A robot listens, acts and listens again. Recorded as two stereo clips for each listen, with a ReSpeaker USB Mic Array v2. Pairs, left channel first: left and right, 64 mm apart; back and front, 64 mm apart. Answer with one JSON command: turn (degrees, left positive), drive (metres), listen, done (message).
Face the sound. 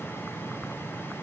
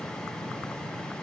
{"listen": true}
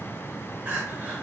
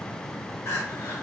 {"turn": -155}
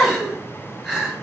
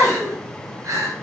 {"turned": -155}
{"done": "Facing the crying."}